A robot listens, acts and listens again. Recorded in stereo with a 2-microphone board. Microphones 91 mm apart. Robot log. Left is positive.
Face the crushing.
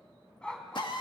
cmd idle
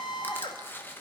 note: The crushing: about 25° left or 155° left.
cmd yaw +25
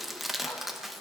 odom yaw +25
end: Facing the crushing.